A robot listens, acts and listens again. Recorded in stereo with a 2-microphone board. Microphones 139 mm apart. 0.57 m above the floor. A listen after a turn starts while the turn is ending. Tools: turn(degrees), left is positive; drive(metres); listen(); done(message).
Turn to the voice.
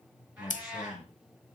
turn(degrees=30)
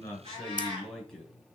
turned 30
done("Found it: a man speaking, straight ahead.")